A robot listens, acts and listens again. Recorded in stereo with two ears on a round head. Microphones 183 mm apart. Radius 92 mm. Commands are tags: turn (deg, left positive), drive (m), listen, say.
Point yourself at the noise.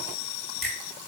<turn deg="30"/>
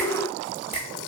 <turn deg="150"/>
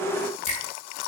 <listen/>
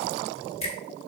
<turn deg="35"/>
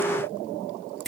<say>Found it: a finger snap, straight ahead.</say>